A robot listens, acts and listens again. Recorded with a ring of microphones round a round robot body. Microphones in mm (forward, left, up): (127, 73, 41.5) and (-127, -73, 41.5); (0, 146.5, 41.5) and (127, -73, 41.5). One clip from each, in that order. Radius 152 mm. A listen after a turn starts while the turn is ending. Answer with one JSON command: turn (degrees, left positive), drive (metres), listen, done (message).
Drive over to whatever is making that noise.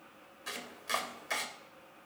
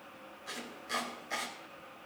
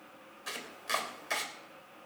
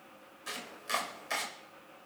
{"turn": 45}
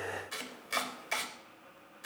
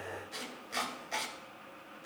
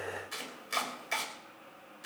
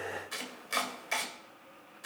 {"turn": 15}
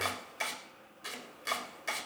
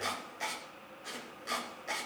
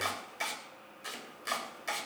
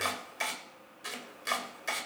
{"drive": 1.0}
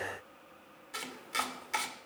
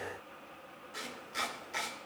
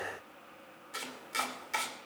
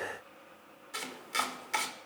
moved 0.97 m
{"drive": 1.0}
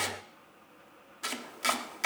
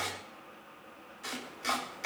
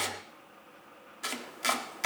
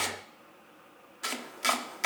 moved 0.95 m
{"turn": 15}
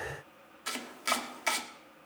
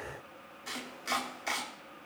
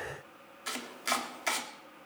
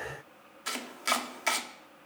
{"drive": 1.0}
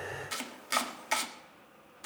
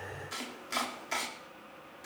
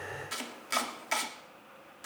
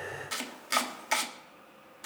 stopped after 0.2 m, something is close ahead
{"done": "Arrived at the chopping, straight ahead."}